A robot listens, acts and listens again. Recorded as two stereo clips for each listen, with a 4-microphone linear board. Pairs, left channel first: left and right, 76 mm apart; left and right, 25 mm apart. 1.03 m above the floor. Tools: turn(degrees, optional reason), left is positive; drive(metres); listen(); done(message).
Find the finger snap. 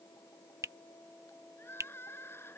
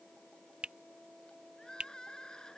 turn(degrees=-45, reason="The finger snap: about 45° right or 135° right.")
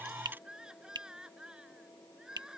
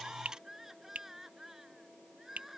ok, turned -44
turn(degrees=-90, reason="So it is at 90° right.")
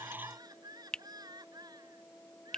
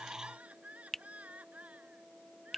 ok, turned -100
turn(degrees=10, reason="The finger snap is now 10° left.")
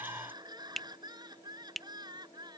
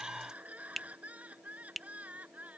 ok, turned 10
done("Facing the finger snap.")